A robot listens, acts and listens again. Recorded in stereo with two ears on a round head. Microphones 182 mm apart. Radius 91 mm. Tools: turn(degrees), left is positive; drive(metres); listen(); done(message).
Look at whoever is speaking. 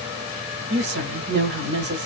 turn(degrees=-55)
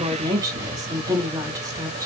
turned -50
turn(degrees=-20)
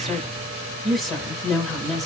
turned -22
done("Facing the woman speaking, 1 to 2 m away.")